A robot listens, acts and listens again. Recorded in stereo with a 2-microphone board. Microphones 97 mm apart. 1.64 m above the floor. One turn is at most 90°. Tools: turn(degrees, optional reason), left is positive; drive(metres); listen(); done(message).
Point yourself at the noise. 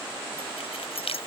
turn(degrees=90)
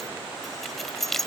done("Found it: keys jangling, straight ahead.")